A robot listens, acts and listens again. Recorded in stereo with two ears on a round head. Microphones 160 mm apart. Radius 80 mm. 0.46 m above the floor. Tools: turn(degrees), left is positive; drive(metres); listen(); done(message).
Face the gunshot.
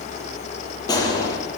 turn(degrees=20)
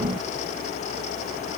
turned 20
listen()
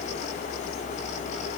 done("I heard a gunshot, but can't make it out now. It was about straight ahead or 140° left.")